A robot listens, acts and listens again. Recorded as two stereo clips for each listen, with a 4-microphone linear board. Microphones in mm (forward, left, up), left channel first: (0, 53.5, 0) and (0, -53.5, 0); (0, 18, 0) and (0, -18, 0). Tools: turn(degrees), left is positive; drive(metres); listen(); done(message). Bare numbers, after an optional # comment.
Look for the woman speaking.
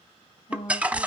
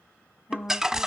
# The woman speaking: about 70° left or 110° left.
turn(70)
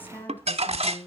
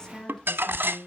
# So it is at 25° left.
turn(25)
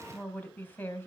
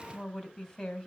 # The woman speaking is now 20° left.
turn(20)
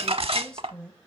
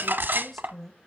# The woman speaking is now 10° left.
turn(10)
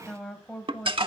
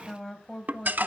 # The woman speaking is now 10° left.
turn(10)
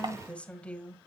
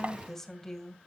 # The woman speaking is now 10° left.
turn(10)
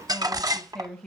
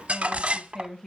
done("Facing the woman speaking.")